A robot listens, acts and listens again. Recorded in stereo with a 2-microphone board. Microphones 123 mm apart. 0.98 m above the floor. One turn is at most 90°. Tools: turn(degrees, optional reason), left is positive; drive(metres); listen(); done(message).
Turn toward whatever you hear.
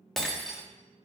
turn(degrees=30)
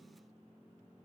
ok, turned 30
listen()
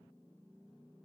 done("I heard breaking glass, but can't make it out now. It was about 30° right or 150° left.")